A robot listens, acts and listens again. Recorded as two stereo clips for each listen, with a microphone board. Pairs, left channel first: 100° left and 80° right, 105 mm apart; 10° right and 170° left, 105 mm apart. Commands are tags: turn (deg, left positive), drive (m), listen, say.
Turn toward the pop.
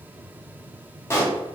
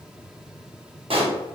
<turn deg="160"/>
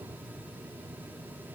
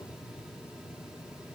<say>Facing where the pop came from. I can't hear it now.</say>